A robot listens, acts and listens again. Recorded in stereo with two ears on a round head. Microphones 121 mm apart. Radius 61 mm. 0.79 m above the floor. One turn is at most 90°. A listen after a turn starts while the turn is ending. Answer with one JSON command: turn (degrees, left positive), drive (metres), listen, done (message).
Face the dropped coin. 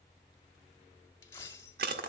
{"turn": 20}
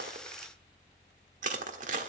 {"listen": true}
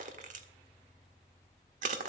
{"done": "I heard a dropped coin, but can't make it out now. It was about straight ahead or 140° left."}